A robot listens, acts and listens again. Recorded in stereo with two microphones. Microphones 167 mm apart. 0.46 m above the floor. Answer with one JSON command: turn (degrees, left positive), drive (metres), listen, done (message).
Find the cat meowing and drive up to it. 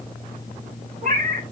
{"turn": -55}
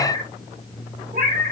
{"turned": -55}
{"turn": -70}
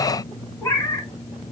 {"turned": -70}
{"turn": 15}
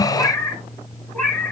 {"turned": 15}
{"turn": 10}
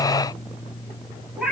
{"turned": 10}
{"drive": 1.0}
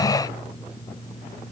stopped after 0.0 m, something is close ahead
{"listen": true}
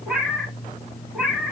{"done": "Blocked. The cat meowing is further on, straight ahead."}